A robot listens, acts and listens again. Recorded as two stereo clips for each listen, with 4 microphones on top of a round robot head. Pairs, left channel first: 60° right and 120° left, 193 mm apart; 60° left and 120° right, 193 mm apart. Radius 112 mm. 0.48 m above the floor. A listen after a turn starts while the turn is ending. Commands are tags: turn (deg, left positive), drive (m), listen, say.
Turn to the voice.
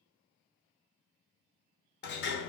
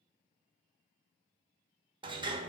<listen/>
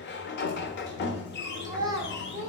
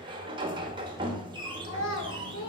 <turn deg="50"/>
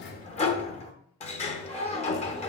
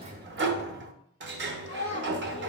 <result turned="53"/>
<say>Found it: a child speaking, straight ahead.</say>